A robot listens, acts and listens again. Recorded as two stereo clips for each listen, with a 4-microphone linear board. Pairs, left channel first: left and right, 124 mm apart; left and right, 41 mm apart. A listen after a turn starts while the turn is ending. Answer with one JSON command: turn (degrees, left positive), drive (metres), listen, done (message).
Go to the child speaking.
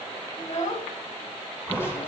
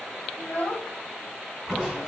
{"turn": 70}
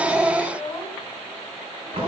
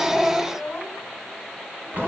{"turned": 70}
{"turn": 30}
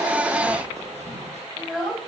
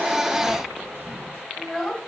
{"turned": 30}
{"drive": 1.0}
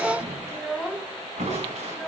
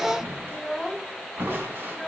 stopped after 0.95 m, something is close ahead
{"done": "Arrived at the child speaking, straight ahead."}